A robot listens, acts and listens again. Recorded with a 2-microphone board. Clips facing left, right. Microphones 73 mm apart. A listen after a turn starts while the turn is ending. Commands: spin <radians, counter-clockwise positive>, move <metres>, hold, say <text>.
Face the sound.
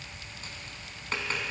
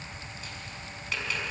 spin 0.70
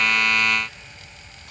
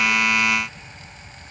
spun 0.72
hold
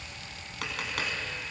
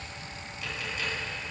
spin 1.75
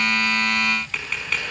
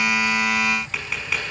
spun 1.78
say Facing the tapping, over 4 m away.